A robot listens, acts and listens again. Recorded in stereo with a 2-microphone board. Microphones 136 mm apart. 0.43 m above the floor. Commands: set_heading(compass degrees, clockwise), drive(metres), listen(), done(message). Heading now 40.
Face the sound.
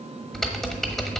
set_heading(10)
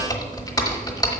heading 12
set_heading(222)
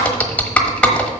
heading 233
set_heading(223)
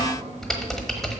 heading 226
done("Found it: typing on a keyboard, straight ahead, 1 to 2 m away.")